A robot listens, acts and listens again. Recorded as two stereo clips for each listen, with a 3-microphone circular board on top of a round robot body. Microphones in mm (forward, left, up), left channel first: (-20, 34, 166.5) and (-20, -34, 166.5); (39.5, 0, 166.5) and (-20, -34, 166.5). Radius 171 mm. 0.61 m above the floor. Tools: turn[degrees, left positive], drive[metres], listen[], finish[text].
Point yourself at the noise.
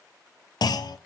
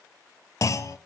Thought: The clunk: 70° left.
Action: turn[70]
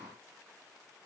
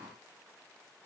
Action: finish[Facing where the clunk came from. I can't hear it now.]